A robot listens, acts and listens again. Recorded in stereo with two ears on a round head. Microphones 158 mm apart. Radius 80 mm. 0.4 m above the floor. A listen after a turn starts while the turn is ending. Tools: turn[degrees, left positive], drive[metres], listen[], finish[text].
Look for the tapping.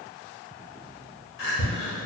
Thought: The tapping: about 30° left or 150° left.
Action: turn[30]
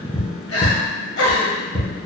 Action: finish[Facing the tapping.]